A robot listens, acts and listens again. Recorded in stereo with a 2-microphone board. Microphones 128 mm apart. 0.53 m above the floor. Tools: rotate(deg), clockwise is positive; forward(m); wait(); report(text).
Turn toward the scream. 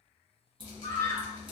rotate(-30)
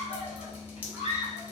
rotate(-115)
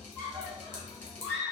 report("Facing the scream, 1 to 2 m away.")